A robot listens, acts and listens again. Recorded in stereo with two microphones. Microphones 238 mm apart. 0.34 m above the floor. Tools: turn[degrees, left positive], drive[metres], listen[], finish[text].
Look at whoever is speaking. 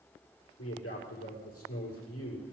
Thought: The man speaking: about 70° left or 110° left.
Action: turn[70]
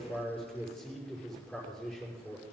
Action: finish[Found it: a man speaking, straight ahead, over 4 m away.]